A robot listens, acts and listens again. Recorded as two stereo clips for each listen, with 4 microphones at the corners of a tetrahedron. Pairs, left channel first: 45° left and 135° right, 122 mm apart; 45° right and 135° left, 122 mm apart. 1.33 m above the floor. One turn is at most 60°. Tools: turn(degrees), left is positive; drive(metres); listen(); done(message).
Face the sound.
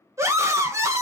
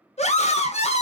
turn(degrees=-60)
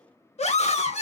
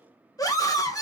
turn(degrees=15)
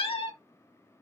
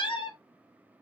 done("Facing the scream, 1 to 2 m away.")